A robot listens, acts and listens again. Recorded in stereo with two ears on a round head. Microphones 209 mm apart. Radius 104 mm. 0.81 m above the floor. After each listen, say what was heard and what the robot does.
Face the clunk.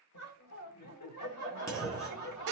Turn 30° left.
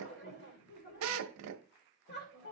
Keep listening.
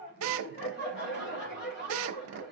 I heard a clunk, but can't make it out now. It was about 15° right or 135° left.